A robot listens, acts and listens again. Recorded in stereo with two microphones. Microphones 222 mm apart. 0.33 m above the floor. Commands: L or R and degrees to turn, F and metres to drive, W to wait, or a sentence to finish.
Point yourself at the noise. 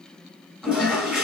R30
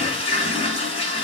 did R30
L25
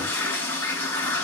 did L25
L10
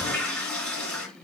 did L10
Found it: a toilet flushing, straight ahead, 2 to 4 m away.